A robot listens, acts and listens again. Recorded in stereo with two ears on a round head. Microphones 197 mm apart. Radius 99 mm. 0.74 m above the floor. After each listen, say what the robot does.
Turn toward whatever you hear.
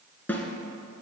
Turn 30° left.
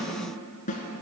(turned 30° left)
Turn 140° left.
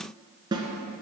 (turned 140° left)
Turn 20° right.
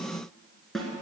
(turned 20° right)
Found it: a snare drum, straight ahead, 1 to 2 m away.